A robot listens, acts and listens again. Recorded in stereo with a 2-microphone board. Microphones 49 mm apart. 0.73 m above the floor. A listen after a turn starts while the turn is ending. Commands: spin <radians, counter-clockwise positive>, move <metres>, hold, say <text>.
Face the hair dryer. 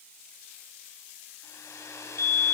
spin 1.57
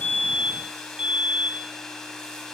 spin 0.17
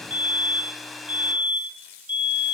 say Found it: a hair dryer, straight ahead, over 4 m away.